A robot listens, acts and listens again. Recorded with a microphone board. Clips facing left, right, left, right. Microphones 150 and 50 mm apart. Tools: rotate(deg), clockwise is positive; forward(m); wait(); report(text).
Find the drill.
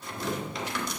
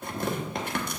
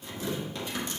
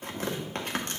wait()
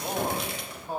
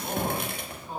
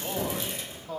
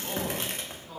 wait()
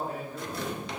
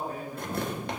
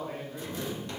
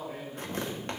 report("I can't make out a drill to turn to.")